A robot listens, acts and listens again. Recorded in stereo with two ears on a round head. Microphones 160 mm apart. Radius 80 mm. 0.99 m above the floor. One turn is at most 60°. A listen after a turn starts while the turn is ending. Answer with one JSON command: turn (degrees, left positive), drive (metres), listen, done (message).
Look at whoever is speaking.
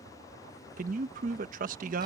{"turn": -50}
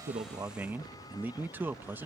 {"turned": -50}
{"turn": -15}
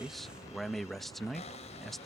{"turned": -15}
{"done": "Facing the man speaking."}